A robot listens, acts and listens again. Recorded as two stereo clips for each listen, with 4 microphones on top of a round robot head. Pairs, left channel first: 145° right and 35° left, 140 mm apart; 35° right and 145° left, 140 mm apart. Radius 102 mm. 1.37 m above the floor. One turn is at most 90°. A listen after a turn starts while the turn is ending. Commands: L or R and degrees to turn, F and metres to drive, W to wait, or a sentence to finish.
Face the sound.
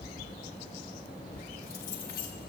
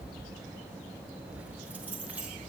R90
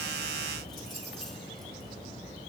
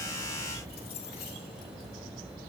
R55
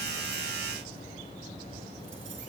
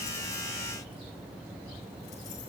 W
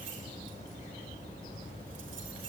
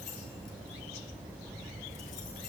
W
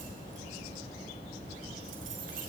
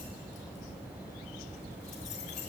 Found it: keys jangling, straight ahead.